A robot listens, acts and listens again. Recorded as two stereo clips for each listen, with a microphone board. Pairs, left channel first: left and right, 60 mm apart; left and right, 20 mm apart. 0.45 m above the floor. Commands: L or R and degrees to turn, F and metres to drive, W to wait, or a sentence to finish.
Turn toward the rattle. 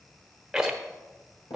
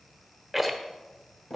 R30
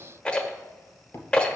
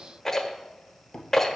L20
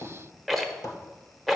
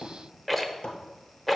Found it: a rattle, straight ahead.